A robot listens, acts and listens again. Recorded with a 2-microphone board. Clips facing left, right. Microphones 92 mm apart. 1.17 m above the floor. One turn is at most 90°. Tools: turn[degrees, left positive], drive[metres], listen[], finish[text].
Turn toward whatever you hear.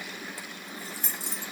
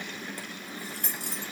Thought: The keys jangling: about 60° right or 120° right.
Action: turn[-60]
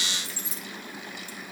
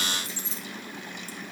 Thought: So it is at 25° right.
Action: turn[-25]
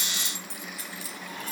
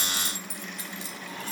Thought: The keys jangling is now 25° right.
Action: turn[-25]
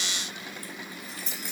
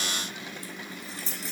Thought: The keys jangling is now 35° right.
Action: turn[-35]
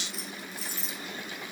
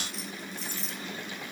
Action: finish[Found it: keys jangling, straight ahead, 1 to 2 m away.]